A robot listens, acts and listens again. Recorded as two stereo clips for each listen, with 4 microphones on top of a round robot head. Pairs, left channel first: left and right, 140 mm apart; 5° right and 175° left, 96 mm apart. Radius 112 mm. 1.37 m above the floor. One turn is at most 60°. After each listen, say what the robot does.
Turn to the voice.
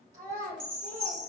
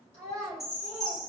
Turn 45° right.
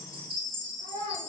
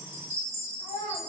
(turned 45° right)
Turn 15° right.
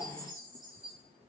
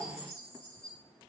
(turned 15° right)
Keep listening.
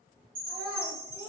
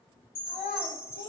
Found it: a child speaking, straight ahead.